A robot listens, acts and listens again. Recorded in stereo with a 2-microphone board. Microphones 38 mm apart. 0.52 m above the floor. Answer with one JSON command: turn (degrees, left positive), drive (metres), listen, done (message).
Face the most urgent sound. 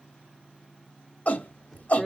{"turn": 45}
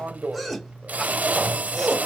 {"done": "Facing the shout."}